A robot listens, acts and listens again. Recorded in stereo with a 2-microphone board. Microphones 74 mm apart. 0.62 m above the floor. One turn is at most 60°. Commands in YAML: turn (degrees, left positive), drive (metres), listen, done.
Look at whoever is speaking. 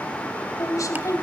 turn: 50
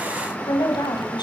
turn: 60
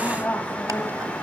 turn: 30
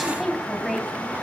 done: "Found it: a woman speaking, straight ahead, 2 to 4 m away."